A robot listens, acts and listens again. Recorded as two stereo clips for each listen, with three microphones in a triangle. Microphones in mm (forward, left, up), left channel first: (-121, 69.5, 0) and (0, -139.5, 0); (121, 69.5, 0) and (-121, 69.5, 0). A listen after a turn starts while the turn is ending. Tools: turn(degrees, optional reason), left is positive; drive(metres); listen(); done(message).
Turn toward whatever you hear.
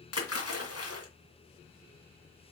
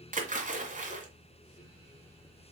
turn(degrees=120, reason="The splash: 120° left.")
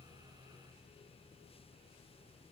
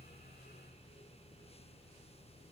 done("I heard a splash from this way, but can't make it out now.")